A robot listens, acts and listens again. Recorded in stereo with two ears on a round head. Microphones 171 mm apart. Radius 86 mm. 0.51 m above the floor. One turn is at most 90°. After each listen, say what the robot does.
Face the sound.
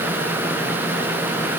Keep listening.
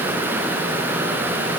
Keep listening.
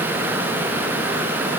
I can't make out anything.